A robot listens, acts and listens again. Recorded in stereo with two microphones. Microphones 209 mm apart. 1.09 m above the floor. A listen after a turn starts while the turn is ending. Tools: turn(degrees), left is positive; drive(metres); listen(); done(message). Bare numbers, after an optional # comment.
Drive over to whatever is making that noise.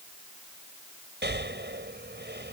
# The breathing: about 55° right or 125° right.
turn(-55)
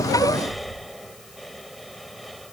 drive(1.0)
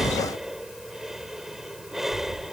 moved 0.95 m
drive(1.0)
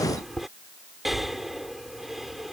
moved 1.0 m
drive(1.0)
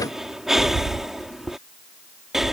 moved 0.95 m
drive(1.0)
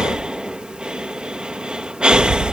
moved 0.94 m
drive(1.0)
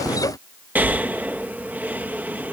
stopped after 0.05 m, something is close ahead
# The breathing is now 10° right.
turn(-10)
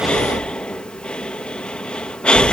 done("I am next to the breathing.")